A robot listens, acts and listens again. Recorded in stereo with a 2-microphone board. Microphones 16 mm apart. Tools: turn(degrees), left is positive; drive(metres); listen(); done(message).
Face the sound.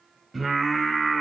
turn(degrees=-30)
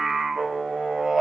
turn(degrees=-135)
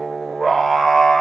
turn(degrees=15)
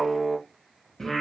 turn(degrees=20)
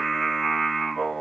turn(degrees=10)
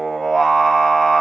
done("Found it: singing, straight ahead, 1 to 2 m away.")